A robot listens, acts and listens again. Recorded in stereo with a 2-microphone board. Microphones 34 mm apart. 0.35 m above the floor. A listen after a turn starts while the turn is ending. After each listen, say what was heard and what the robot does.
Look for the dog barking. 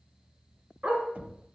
The dog barking: about 35° right or 145° right. Turn 35° right.
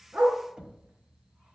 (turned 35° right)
So it is at 125° right. Turn 125° right.
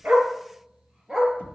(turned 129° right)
The dog barking is now 20° right. Turn 20° right.
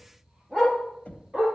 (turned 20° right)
Facing the dog barking, 2 to 4 m away.